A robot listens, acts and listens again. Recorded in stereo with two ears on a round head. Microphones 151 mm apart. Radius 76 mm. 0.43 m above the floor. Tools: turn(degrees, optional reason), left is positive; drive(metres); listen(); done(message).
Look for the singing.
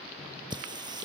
turn(degrees=-25, reason="The singing: about 25° right or 155° right.")
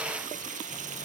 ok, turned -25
turn(degrees=-135, reason="So it is at 135° right.")
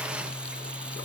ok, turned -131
done("Found it: singing, straight ahead.")